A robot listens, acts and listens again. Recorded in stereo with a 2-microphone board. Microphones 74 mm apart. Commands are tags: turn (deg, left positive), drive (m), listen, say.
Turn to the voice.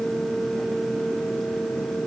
<listen/>
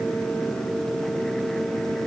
<listen/>
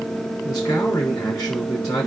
<turn deg="50"/>
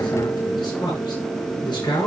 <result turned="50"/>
<turn deg="80"/>
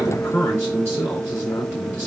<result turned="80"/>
<turn deg="30"/>
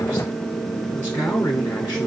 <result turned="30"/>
<turn deg="30"/>
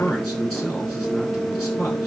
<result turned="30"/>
<say>Facing the man speaking, over 4 m away.</say>